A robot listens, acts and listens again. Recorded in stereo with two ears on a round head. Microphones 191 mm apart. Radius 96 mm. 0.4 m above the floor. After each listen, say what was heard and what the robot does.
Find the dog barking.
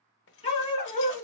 The dog barking: about 25° left or 155° left. Turn 25° left.
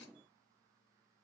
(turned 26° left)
Keep listening.
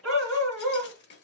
Found it: a dog barking, straight ahead, 1 to 2 m away.